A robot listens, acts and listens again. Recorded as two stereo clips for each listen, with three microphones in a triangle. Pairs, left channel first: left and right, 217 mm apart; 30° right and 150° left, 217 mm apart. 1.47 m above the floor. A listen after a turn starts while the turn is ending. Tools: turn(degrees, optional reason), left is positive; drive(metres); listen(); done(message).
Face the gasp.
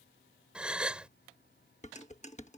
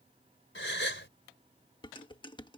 done("Found it: a gasp, straight ahead.")